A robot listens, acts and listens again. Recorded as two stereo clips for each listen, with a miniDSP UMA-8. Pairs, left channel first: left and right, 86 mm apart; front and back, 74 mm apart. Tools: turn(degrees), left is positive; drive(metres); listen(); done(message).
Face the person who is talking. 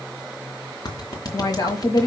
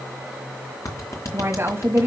turn(degrees=120)
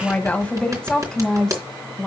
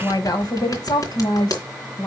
done("Facing the woman speaking, 1 to 2 m away.")